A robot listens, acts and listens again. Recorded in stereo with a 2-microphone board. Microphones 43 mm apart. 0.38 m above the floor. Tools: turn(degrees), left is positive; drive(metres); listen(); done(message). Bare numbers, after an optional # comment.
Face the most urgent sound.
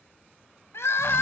# The crying: about 70° left or 110° left.
turn(70)
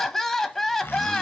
done("Facing the crying.")